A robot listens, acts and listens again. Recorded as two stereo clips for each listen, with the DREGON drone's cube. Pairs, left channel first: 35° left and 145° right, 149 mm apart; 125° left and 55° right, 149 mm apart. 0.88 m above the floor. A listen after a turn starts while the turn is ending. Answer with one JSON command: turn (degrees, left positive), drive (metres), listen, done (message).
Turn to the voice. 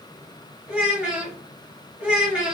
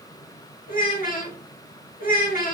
{"turn": 130}
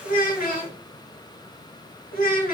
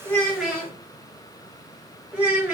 {"turn": 25}
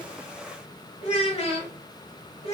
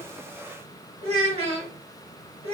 {"turn": -15}
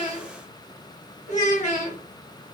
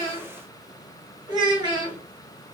{"done": "Found it: a child speaking, straight ahead, 1 to 2 m away."}